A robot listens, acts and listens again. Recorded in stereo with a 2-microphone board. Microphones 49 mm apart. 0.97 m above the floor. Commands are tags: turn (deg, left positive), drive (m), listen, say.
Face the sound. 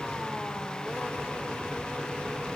<listen/>
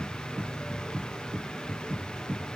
<listen/>
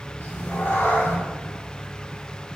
<turn deg="60"/>
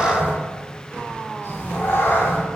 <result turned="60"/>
<turn deg="60"/>
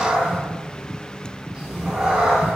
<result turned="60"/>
<turn deg="-30"/>
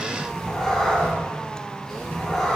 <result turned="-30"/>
<say>Found it: a cat meowing, straight ahead, 2 to 4 m away.</say>